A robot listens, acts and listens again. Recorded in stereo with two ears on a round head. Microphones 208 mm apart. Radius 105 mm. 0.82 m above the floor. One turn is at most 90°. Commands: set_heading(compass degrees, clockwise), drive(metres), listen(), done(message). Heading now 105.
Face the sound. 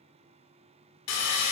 set_heading(15)
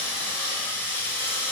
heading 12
set_heading(2)
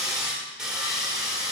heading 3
done("Facing the sawing.")